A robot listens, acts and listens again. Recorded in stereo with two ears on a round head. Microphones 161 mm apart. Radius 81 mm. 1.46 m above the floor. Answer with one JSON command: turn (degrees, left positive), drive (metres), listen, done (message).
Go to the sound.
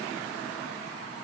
{"listen": true}
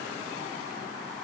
{"listen": true}
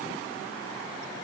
{"done": "I can't make out anything to turn to."}